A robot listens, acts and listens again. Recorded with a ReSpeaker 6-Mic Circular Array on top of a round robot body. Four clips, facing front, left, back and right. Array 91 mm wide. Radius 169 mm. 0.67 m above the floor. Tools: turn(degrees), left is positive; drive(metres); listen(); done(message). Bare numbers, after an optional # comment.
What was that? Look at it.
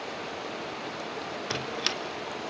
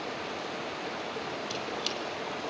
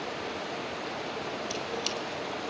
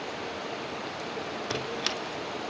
# The squeak: 30° right.
turn(-30)
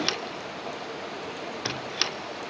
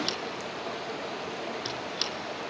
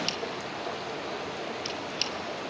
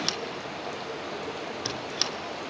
# The squeak is now 10° right.
turn(-10)
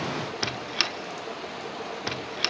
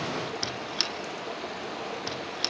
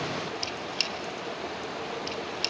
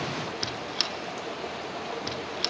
done("Found it: a squeak, straight ahead, under 1 m away.")